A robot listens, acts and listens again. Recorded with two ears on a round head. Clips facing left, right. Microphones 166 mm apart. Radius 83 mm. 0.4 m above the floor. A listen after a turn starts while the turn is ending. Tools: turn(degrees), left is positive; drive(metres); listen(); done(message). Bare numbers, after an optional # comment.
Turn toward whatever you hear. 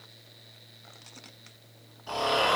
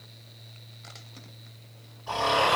# The snoring: about 15° left or 165° left.
turn(15)
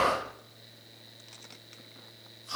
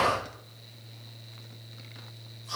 # So it is at 150° left.
turn(150)
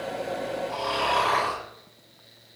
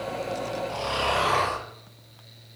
# The snoring is now 10° right.
turn(-10)
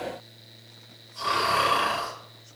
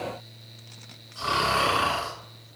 done("Facing the snoring.")